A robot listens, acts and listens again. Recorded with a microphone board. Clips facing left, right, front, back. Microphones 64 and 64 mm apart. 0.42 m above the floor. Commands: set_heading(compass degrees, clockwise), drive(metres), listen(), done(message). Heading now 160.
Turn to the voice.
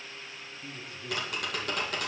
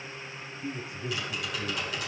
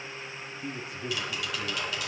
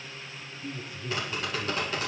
set_heading(180)
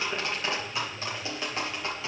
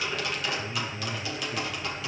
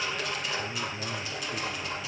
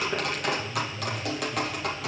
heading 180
set_heading(200)
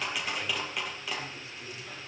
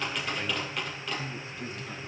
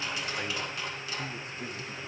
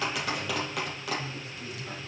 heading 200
set_heading(235)
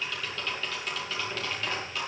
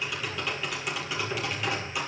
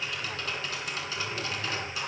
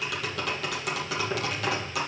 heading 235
listen()
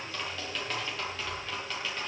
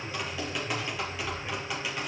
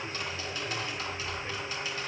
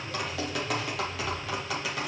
set_heading(265)
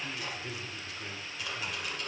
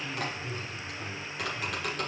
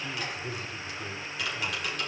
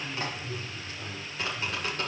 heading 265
set_heading(250)
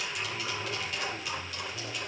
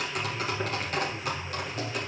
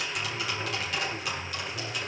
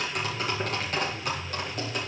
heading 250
done("Found it: a man speaking, straight ahead.")